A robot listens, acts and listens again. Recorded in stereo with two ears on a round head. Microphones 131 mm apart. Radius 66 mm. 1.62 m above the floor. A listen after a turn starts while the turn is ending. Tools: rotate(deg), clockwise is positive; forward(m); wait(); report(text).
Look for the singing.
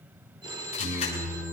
rotate(40)
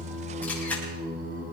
rotate(105)
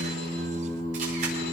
report("Facing the singing, over 4 m away.")